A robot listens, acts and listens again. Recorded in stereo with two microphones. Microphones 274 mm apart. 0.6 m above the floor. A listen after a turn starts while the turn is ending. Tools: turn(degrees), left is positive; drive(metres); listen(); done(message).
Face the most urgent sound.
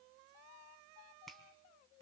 listen()
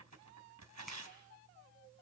listen()
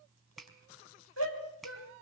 turn(degrees=60)
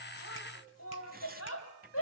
turn(degrees=60)
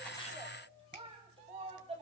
turn(degrees=-20)
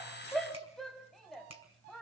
done("Found it: a shout, straight ahead.")